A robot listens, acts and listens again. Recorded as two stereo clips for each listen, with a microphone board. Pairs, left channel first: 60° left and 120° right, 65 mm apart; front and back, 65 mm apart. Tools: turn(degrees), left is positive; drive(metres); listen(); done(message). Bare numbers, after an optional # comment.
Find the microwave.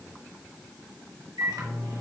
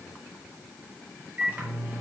# The microwave: 120° right.
turn(-120)
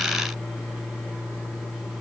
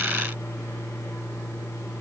# The microwave is now 40° right.
turn(-40)
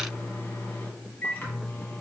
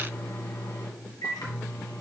done("Facing the microwave, 1 to 2 m away.")